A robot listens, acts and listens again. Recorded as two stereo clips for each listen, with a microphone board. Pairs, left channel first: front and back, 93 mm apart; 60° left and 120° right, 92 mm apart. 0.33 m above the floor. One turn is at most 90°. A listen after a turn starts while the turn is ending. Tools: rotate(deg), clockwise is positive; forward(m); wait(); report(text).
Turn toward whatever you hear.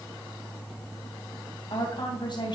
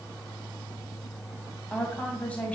rotate(15)
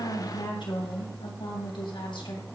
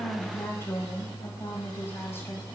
report("Facing the woman speaking, 2 to 4 m away.")